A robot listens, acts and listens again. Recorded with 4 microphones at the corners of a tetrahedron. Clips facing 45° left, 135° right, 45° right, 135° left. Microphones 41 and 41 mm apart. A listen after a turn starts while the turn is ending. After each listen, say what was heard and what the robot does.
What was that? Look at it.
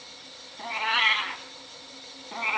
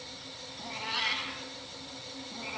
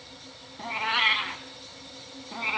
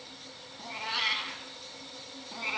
The cat meowing: 20° left. Turn 20° left.
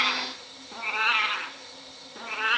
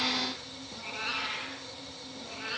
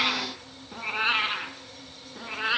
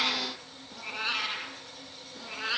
The cat meowing is now 15° left. Turn 15° left.
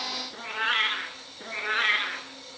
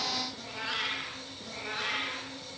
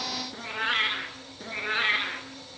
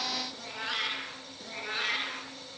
The cat meowing is now 10° left. Turn 10° left.
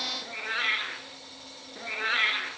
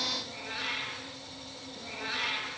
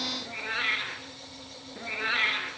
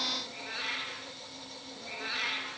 Found it: a cat meowing, straight ahead.